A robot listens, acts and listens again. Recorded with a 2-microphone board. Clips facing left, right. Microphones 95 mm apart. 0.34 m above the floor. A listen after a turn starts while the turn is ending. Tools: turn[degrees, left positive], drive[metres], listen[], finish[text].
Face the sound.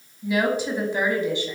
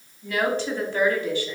Thought: The woman speaking: about 20° left or 160° left.
Action: turn[20]
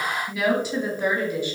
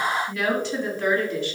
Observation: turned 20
Thought: The woman speaking: about 15° left or 165° left.
Action: turn[15]
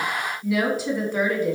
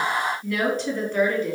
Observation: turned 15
Action: turn[30]
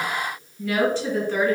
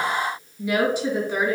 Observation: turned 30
Thought: So it is at 10° right.
Action: turn[-10]
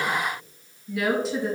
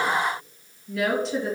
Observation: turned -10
Action: finish[Found it: a woman speaking, straight ahead, 2 to 4 m away.]